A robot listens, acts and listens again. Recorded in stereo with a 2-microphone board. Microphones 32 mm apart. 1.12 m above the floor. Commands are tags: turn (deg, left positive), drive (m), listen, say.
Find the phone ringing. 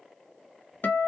<listen/>
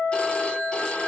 <turn deg="35"/>
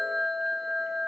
<say>Facing the phone ringing.</say>